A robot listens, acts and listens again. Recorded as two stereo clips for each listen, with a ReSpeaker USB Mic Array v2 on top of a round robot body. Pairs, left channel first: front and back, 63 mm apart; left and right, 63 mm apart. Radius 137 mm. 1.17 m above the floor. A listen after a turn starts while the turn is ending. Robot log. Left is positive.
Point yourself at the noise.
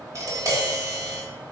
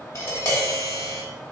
note: The tapping: 135° left.
cmd yaw +135
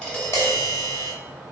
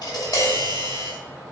note: The tapping is now 35° left.
cmd yaw +35
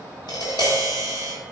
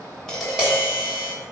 note: The tapping is now 10° right.
cmd yaw -10
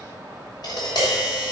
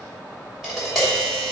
end: Found it: tapping, straight ahead.